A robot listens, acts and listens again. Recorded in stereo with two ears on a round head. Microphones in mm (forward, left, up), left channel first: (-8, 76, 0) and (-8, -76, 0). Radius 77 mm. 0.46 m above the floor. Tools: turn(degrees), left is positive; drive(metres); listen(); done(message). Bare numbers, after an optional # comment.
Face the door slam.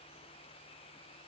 listen()
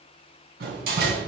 # The door slam: about 55° right or 125° right.
turn(-55)
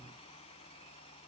listen()
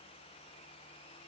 done("I heard a door slam, but can't make it out now. It was about straight ahead or 70° right.")